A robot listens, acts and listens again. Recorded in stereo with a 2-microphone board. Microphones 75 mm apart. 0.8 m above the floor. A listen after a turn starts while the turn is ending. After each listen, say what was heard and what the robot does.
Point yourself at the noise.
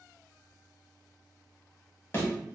The thud: about 35° left or 145° left. Turn 35° left.
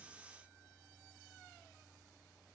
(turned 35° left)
Keep listening.
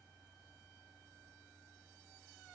I heard a thud, but can't make it out now. It was about straight ahead or 110° left.